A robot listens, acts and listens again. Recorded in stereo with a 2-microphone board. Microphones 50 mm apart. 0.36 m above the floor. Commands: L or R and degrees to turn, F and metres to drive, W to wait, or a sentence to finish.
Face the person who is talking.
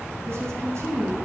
R60
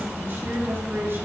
R55
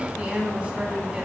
R25
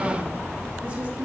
R25
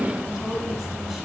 Found it: a woman speaking, straight ahead.